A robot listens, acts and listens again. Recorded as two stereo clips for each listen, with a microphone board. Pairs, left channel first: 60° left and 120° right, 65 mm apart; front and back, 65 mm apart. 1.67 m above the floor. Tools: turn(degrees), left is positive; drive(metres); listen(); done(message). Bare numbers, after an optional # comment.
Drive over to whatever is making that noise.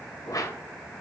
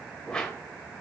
# The whoosh: 75° left.
turn(75)
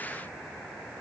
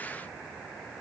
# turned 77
listen()
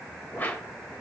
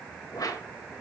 drive(1.0)
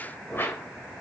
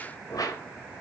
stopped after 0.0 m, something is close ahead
done("Blocked. The whoosh is further on, straight ahead.")